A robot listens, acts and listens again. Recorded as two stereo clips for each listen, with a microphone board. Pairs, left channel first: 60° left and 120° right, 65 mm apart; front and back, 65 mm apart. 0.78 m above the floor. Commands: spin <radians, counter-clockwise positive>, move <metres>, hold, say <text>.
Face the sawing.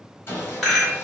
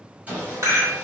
spin 2.01
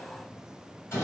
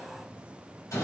spin 0.26
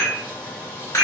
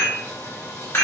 say Found it: sawing, straight ahead.